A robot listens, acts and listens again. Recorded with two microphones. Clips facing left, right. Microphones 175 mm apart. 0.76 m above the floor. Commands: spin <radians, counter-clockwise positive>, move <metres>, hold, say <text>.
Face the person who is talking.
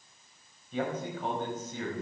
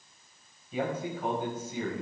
spin -0.52
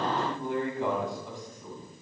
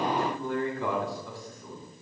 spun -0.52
spin 0.35
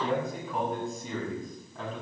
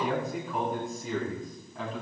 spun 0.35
say Facing the man speaking.